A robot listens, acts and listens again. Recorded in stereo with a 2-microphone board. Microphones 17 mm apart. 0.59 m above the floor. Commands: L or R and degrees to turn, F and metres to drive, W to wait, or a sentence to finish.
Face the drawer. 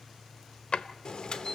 L90
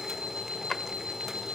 L15
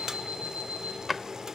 Facing the drawer.